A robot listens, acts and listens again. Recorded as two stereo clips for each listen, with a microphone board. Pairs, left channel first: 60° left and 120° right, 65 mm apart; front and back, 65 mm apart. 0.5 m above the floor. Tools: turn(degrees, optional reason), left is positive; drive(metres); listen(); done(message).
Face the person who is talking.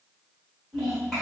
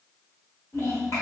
turn(degrees=-25, reason="The child speaking: 25° right.")
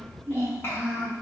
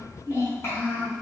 turn(degrees=25, reason="The child speaking is now 25° left.")
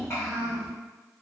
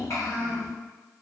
turn(degrees=20, reason="The child speaking is now 20° left.")
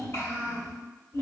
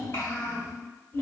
turn(degrees=25, reason="The child speaking is now 25° left.")
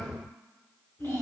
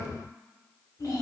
done("Found it: a child speaking, straight ahead.")